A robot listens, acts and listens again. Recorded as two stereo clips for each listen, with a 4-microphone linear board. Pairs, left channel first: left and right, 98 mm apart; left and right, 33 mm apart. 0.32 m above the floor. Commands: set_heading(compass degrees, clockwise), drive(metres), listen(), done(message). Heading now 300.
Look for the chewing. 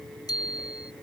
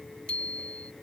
listen()
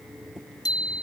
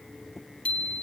listen()
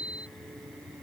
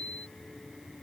done("I can't make out chewing, only a bicycle bell.")